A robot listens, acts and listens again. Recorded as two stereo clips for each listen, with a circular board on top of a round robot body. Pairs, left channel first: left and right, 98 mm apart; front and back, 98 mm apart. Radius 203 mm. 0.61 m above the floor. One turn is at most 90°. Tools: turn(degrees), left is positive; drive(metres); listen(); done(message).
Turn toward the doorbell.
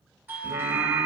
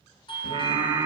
turn(degrees=-15)
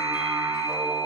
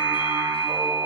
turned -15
done("Found it: a doorbell, straight ahead, 2 to 4 m away.")